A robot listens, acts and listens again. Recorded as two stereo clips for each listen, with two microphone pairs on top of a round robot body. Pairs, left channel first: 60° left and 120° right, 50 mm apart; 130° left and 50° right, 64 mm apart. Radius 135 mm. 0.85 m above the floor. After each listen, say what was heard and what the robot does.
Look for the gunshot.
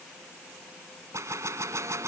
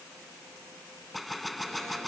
The gunshot: 140° right. Turn 140° right.
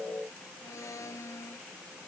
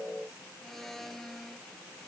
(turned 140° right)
I heard a gunshot from this way, but can't make it out now.